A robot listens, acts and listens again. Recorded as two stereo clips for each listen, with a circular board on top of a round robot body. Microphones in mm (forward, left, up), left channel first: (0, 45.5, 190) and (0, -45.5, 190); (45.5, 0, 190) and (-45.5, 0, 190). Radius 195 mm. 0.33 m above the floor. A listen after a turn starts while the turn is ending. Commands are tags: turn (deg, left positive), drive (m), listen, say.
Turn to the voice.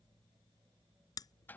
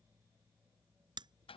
<listen/>
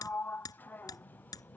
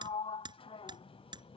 <listen/>
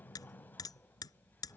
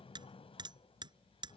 <say>I can't make out anyone speaking to turn to.</say>